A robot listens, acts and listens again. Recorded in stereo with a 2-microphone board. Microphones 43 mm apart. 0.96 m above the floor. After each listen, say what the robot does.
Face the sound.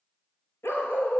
Turn 90° left.
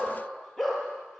Facing the dog barking.